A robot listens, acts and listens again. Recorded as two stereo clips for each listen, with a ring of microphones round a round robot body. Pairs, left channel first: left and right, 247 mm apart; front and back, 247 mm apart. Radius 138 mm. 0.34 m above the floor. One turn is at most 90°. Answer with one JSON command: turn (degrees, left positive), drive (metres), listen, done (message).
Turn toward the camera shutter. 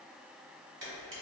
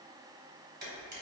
{"turn": -90}
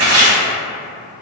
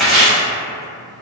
{"turn": -40}
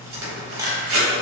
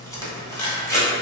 {"turn": -15}
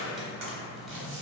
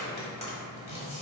{"listen": true}
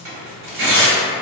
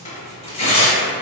{"listen": true}
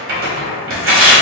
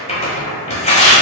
{"done": "I heard a camera shutter from this way, but can't make it out now."}